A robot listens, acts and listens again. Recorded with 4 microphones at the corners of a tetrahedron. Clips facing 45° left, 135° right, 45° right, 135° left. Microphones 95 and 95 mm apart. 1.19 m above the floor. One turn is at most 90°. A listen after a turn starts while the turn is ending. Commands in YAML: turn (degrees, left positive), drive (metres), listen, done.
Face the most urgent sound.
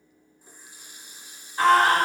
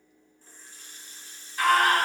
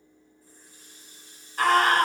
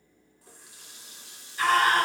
turn: -15
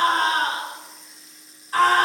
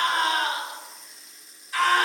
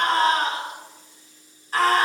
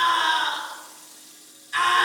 done: "Found it: a scream, straight ahead."